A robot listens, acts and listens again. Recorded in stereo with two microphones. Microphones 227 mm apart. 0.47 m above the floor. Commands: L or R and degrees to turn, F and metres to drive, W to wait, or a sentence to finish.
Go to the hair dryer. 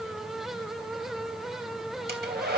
R45
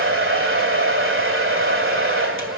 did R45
R80
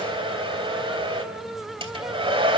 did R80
R25
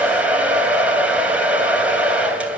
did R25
F1.0
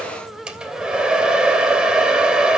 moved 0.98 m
F1.0
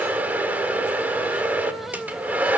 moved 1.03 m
R10
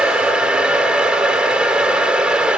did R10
F1.0
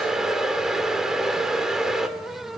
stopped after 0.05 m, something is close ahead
Arrived at the hair dryer, straight ahead.